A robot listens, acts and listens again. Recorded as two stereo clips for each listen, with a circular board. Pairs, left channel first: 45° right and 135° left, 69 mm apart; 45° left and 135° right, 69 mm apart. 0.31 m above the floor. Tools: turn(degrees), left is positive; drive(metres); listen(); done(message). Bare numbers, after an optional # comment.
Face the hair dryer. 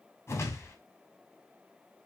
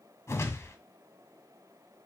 listen()
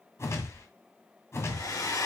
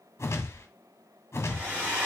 # The hair dryer: 75° right.
turn(-75)
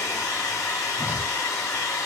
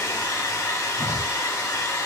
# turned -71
done("Found it: a hair dryer, straight ahead.")